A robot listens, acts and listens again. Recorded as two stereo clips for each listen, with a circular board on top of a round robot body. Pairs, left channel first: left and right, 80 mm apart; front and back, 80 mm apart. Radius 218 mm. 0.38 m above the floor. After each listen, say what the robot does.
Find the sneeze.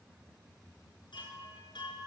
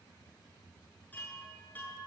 Keep listening.
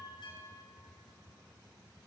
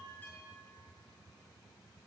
Keep listening.
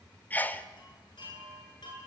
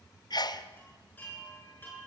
Turn 20° left.
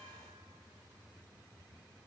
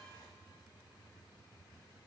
I heard a sneeze from this way, but can't make it out now.